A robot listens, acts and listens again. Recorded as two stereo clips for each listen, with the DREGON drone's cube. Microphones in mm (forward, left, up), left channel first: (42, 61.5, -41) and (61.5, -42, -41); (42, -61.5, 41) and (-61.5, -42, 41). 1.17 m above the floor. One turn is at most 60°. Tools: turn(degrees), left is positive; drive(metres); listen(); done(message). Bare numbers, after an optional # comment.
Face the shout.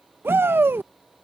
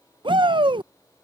# The shout: 150° right.
turn(-60)
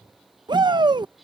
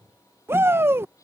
# The shout is now 120° right.
turn(-60)
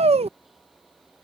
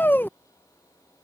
# The shout is now 80° right.
turn(-60)
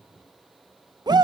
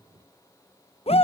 # The shout is now 30° right.
turn(-30)
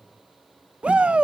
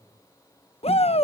done("Facing the shout.")